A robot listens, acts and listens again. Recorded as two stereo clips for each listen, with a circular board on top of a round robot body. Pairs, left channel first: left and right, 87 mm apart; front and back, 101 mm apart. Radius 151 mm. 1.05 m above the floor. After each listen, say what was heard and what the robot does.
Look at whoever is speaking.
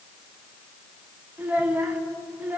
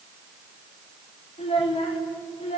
The child speaking: 20° right. Turn 20° right.
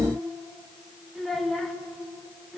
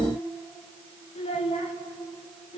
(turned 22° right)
Facing the child speaking, 2 to 4 m away.